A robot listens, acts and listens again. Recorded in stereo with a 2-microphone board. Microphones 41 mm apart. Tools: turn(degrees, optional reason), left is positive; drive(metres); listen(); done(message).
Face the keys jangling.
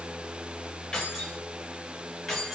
turn(degrees=30)
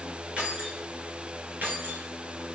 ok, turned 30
turn(degrees=-45, reason="So it is at 45° right.")
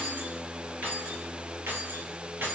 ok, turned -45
turn(degrees=-55, reason="The keys jangling is now 55° right.")
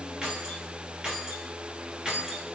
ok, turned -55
turn(degrees=-15, reason="The keys jangling is now 15° right.")
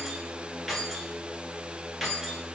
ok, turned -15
done("Facing the keys jangling, 1 to 2 m away.")